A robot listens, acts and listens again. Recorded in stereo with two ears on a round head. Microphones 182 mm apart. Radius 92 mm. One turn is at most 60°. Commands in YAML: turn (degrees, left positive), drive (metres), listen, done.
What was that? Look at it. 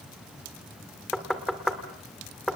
turn: 30
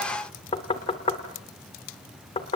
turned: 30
turn: 60
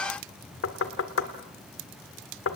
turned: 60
turn: 60
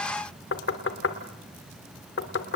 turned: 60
turn: 55
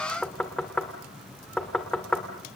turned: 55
done: "Found it: knocking, straight ahead."